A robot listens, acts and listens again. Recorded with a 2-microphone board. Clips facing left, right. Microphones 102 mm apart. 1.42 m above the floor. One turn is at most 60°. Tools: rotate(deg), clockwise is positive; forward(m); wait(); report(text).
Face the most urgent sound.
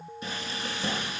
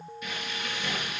wait()
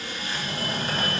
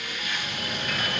rotate(-55)
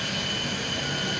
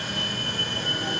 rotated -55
report("Facing the fire alarm.")